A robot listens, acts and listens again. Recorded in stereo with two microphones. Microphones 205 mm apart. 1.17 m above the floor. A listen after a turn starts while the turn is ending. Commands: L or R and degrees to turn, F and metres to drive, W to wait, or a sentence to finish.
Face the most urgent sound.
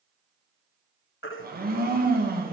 L90
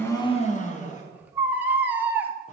R10
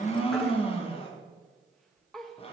W
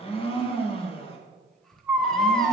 Facing the baby crying.